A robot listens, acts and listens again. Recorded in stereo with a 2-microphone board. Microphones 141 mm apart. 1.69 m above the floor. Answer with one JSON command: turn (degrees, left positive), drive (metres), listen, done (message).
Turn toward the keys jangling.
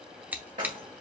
{"turn": -70}
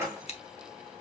{"turn": -20}
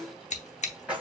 {"done": "Found it: keys jangling, straight ahead."}